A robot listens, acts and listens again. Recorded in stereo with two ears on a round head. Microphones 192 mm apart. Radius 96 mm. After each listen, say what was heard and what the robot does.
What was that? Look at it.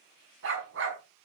The dog barking: about 60° right or 120° right. Turn 60° right.
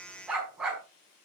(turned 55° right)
Facing the dog barking, over 4 m away.